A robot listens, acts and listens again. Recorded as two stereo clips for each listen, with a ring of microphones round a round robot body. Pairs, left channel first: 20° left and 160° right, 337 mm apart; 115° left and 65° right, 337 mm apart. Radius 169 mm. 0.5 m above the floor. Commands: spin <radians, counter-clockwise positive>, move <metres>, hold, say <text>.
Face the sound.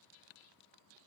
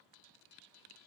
hold
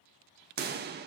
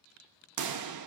spin -1.75
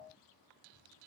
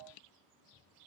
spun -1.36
spin -0.35
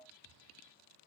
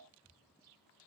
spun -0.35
say Facing where the pop came from. I can't hear it now.